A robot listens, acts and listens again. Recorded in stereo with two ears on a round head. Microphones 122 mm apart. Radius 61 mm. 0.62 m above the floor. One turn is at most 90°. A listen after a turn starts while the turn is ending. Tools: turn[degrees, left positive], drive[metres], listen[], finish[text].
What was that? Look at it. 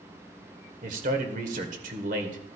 Thought: The man speaking: about 60° right or 120° right.
Action: turn[-60]
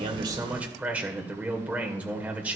Thought: So it is at 10° right.
Action: turn[-10]
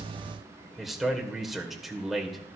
Action: finish[Facing the man speaking.]